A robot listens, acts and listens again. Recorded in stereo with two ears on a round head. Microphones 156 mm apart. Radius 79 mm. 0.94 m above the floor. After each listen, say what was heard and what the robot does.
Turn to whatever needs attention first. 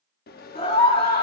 The scream: about 30° left or 150° left. Turn 30° left.
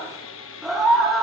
Found it: a scream, straight ahead.